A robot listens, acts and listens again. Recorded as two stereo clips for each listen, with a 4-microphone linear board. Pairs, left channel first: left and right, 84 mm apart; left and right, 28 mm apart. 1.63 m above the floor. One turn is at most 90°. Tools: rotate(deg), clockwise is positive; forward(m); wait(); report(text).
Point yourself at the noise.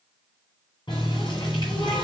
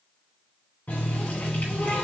rotate(-75)
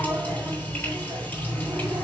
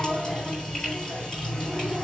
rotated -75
rotate(-20)
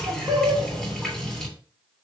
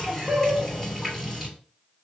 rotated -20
report("Facing the running tap, 2 to 4 m away.")